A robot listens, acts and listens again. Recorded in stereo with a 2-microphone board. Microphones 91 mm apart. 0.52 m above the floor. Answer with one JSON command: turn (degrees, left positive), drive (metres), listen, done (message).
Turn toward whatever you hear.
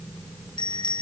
{"turn": 60}
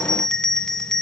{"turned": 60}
{"done": "Facing the bell, 2 to 4 m away."}